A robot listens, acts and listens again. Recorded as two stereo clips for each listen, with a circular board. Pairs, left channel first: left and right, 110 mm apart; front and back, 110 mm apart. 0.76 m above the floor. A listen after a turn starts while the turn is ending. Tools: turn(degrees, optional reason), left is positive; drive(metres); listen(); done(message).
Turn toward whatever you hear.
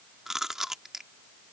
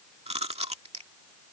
turn(degrees=-175, reason="The chewing: 175° right.")
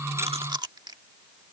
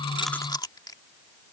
turn(degrees=-45, reason="The chewing is now 45° right.")
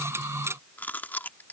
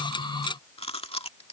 turn(degrees=15, reason="The chewing is now 15° left.")
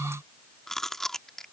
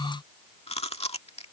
done("Found it: chewing, straight ahead.")